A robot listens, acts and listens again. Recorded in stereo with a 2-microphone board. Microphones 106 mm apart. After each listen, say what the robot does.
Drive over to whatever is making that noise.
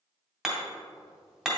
Turn 30° left.
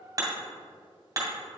Turn 35° right.
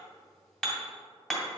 Drive 1.0 m forward.
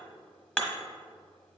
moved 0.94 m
Turn 10° left.
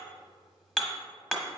Drive 1.0 m forward.
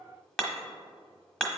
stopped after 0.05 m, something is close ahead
Arrived at the hammering, straight ahead.